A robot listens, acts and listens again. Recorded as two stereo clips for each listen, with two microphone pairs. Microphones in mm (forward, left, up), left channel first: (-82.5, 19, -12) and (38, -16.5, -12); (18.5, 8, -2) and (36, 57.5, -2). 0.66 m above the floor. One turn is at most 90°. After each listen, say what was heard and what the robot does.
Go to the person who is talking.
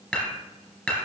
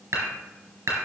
Keep listening.
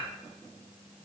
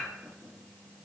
Keep listening.
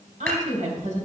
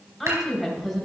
The woman speaking: 20° right. Turn 20° right.
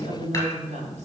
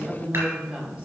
Drive 1.0 m forward.
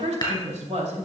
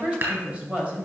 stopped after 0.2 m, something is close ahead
Blocked. The woman speaking is further on, straight ahead.